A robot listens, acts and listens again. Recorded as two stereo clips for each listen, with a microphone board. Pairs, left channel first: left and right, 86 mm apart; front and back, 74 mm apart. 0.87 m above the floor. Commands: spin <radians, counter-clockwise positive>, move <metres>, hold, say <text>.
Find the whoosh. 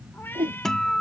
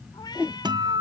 spin -1.75
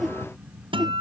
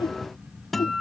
say Found it: a whoosh, straight ahead.